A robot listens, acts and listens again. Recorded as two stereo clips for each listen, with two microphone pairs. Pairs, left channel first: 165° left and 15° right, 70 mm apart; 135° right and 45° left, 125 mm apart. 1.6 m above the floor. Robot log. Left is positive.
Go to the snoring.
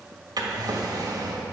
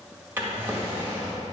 cmd idle
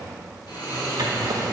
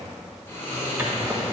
note: The snoring: 160° left.
cmd yaw +160
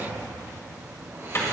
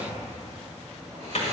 note: The snoring is now 30° left.
cmd yaw +30
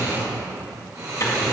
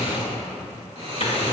note: The snoring is now 20° left.
cmd yaw +20
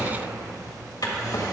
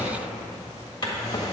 cmd fwd 1.0
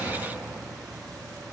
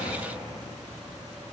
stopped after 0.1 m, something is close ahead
end: Blocked. The snoring is further on, straight ahead.